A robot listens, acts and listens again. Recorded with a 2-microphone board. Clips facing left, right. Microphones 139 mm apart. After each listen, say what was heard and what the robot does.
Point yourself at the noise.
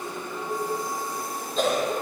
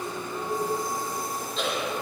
The cough: about 45° left or 135° left. Turn 45° left.
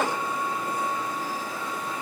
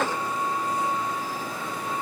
Keep listening.
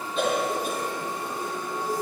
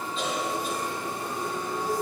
So it is at 80° left. Turn 80° left.
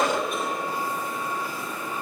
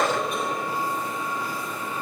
Found it: a cough, straight ahead.